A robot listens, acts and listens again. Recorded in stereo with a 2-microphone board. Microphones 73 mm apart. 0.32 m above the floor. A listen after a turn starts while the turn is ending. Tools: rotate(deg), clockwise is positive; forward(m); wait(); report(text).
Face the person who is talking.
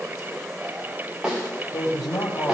rotate(-65)
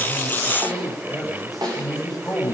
report("Facing the man speaking, over 4 m away.")